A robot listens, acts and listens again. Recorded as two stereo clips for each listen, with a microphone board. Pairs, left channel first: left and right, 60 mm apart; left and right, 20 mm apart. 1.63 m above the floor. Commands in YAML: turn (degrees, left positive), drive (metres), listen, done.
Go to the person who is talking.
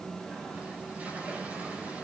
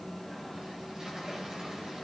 listen: true
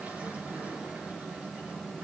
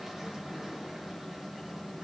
listen: true
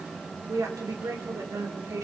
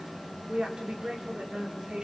turn: -65
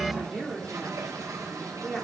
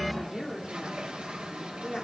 drive: 1.0
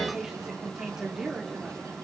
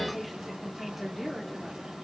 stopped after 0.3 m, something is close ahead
turn: -10
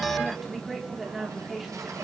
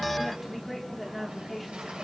done: "Blocked. The woman speaking is further on, straight ahead."